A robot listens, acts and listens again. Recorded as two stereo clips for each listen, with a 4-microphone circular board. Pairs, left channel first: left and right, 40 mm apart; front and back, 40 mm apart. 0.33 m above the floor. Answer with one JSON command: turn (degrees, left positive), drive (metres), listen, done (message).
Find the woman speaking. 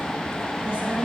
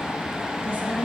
{"turn": -35}
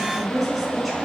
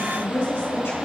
{"done": "Found it: a woman speaking, straight ahead."}